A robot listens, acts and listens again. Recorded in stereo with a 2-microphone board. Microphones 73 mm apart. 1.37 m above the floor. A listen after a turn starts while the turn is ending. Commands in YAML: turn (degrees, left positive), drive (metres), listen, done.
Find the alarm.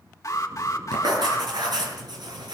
turn: 45
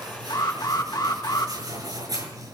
turn: 90
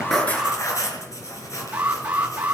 turn: -20
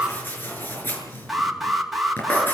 done: "Found it: an alarm, straight ahead, 2 to 4 m away."